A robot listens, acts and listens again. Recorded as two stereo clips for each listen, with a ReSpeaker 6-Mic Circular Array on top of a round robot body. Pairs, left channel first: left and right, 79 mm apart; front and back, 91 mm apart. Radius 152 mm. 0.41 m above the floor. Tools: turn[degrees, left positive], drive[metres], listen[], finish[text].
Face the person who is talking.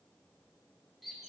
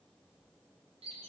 Action: listen[]
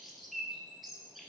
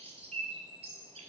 Action: listen[]
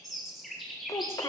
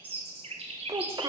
Thought: The child speaking: 135° left.
Action: turn[135]
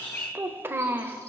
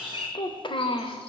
Thought: The child speaking is now 30° right.
Action: turn[-30]
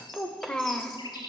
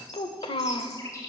Thought: The child speaking is now 10° left.
Action: turn[10]
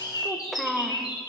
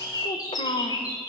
Action: finish[Found it: a child speaking, straight ahead, 1 to 2 m away.]